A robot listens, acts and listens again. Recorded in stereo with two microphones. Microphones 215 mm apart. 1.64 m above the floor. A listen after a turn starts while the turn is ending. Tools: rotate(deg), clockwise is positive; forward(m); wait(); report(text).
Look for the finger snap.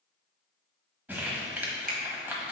rotate(45)
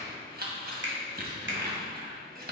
rotate(85)
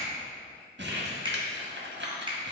rotate(25)
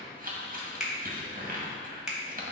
report("Facing the finger snap, 1 to 2 m away.")